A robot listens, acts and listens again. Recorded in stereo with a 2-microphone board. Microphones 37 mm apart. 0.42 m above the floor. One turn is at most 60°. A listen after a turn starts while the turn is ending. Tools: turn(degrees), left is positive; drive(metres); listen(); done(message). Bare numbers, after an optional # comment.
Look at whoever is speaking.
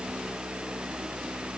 listen()
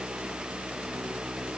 listen()
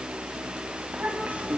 # The child speaking: about 40° right or 140° right.
turn(-40)
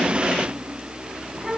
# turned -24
# So it is at 10° right.
turn(-10)
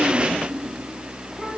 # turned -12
listen()
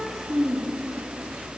done("Facing the child speaking.")